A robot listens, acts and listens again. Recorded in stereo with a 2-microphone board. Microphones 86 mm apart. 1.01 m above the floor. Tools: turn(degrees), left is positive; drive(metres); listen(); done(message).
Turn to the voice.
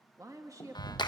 turn(degrees=-45)
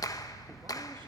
listen()
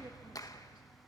listen()
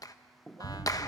done("I heard a woman speaking, but can't make it out now. It was about straight ahead or 90° right.")